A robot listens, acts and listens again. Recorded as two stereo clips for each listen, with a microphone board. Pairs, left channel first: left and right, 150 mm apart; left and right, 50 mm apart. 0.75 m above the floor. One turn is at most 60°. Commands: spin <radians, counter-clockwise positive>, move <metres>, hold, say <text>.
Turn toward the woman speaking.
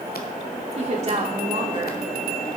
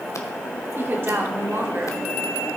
spin -0.79
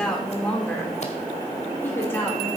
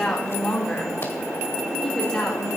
spin 0.26
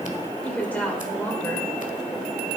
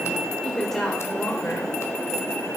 spin 0.17
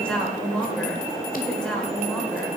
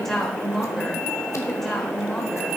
say Facing the woman speaking.